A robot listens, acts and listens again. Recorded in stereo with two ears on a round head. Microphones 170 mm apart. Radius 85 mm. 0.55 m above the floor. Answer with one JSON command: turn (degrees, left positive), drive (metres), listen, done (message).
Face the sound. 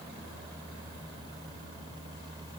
{"listen": true}
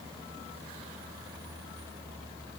{"listen": true}
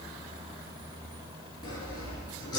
{"turn": 20}
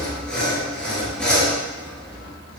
{"done": "Found it: sawing, straight ahead."}